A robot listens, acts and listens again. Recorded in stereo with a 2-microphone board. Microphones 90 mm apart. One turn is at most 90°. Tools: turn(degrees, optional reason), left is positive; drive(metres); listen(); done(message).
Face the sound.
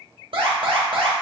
turn(degrees=-70, reason="The alarm: about 70° right or 110° right.")
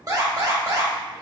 turn(degrees=-40, reason="So it is at 40° right.")
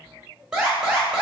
turn(degrees=-10, reason="The alarm is now 10° right.")
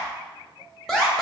done("Found it: an alarm, straight ahead, 1 to 2 m away.")